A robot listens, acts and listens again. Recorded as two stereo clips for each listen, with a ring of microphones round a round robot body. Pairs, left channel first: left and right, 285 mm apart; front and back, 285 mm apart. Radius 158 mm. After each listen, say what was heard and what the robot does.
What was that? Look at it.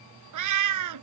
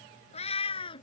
The cat meowing: 75° right. Turn 75° right.
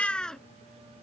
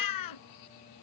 Found it: a cat meowing, straight ahead.